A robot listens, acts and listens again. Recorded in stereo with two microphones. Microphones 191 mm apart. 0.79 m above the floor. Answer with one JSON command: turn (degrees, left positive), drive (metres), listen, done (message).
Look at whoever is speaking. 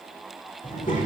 {"turn": 40}
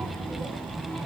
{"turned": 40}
{"done": "Facing the child speaking."}